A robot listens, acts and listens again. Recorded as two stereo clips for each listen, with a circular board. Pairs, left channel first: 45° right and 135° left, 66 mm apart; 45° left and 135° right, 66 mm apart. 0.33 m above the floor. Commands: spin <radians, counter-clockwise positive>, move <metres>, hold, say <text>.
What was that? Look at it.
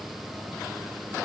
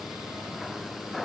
hold
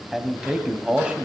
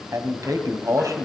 spin -2.71
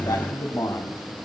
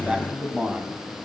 spin -1.13
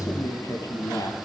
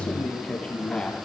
spin -0.52
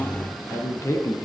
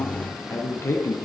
say Found it: a man speaking, straight ahead.